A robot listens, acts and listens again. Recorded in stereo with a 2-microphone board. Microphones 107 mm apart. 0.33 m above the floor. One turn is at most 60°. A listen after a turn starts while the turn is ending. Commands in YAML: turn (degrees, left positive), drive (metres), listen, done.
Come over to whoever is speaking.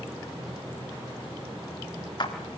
listen: true
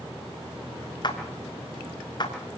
listen: true
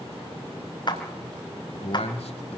turn: 60
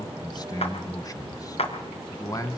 turn: 35
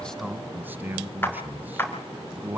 turn: -20
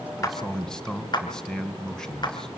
drive: 1.0
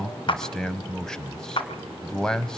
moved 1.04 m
drive: 1.0
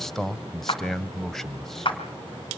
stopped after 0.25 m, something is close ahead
done: "Arrived at the man speaking, straight ahead."